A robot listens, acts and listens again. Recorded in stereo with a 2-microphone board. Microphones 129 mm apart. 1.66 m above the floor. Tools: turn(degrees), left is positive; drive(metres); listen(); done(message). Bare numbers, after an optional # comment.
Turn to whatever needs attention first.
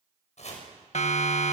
# The siren: about 60° left or 120° left.
turn(60)
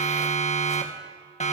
# So it is at 60° left.
turn(60)
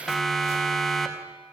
done("Facing the siren, 2 to 4 m away.")